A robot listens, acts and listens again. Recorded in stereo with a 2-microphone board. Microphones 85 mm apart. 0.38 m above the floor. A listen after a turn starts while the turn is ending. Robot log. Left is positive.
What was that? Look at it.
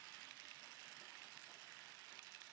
cmd idle
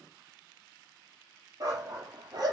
note: The dog barking: about 55° right or 125° right.
cmd yaw -55
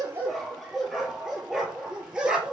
note: So it is at 10° right.
cmd yaw -10
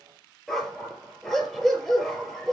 end: Found it: a dog barking, straight ahead.